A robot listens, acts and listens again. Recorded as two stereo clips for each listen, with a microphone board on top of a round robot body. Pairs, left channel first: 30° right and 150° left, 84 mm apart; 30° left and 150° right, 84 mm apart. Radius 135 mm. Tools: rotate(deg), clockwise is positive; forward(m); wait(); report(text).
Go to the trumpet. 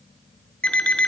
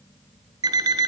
wait()
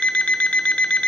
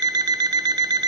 wait()
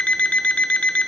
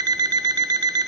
report("I can't make out a trumpet, only an alarm clock.")